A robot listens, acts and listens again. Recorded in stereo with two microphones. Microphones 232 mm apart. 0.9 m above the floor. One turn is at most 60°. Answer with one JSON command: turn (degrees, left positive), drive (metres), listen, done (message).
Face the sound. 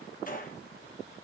{"turn": 40}
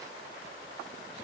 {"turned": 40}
{"listen": true}
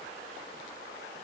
{"done": "I heard a gunshot, but can't make it out now. It was about straight ahead or 100° left."}